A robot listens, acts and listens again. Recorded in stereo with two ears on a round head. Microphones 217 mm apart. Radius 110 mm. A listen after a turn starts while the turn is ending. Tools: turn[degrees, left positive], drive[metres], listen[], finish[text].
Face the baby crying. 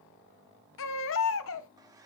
Thought: The baby crying: about 55° left or 125° left.
Action: turn[55]
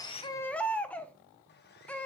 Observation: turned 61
Action: finish[Facing the baby crying.]